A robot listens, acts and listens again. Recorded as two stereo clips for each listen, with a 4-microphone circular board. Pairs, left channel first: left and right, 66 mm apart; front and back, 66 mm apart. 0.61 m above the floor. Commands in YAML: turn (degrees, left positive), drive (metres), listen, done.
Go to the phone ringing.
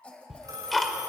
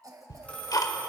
turn: -70
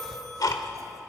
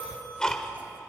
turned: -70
turn: 10
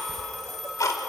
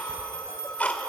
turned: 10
drive: 1.0
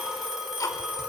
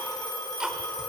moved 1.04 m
turn: -10
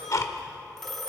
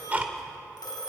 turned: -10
drive: 1.0
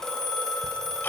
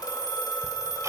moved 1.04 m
turn: 10
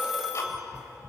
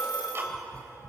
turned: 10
drive: 1.0
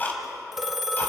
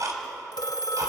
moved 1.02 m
drive: 1.0
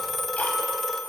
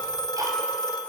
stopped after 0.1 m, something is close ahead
done: "Arrived at the phone ringing, straight ahead."